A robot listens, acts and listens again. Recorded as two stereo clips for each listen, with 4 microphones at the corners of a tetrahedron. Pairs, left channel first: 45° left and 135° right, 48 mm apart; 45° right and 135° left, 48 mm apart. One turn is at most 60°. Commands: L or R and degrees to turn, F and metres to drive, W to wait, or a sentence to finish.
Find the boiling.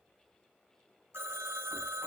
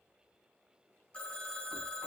W
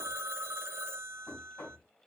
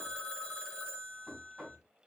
W
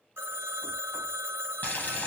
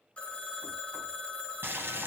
L60
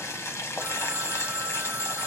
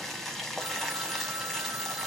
L35
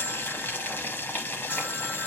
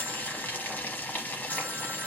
Found it: boiling, straight ahead, 1 to 2 m away.